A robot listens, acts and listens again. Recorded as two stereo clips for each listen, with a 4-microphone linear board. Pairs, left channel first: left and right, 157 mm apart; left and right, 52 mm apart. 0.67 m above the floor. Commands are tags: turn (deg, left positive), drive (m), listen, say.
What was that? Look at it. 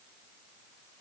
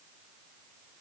<listen/>
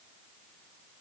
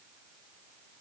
<listen/>
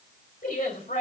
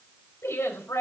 <turn deg="65"/>
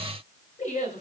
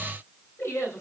<turn deg="50"/>
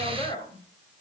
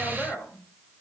<turn deg="30"/>
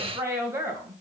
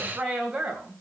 <turn deg="-15"/>
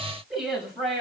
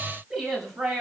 <say>Found it: a woman speaking, straight ahead.</say>